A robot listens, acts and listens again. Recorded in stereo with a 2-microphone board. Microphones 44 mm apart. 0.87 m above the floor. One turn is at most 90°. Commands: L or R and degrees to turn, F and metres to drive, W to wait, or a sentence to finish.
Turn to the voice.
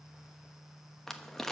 W
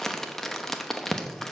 W
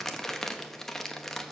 I can't make out anyone speaking, only crumpling.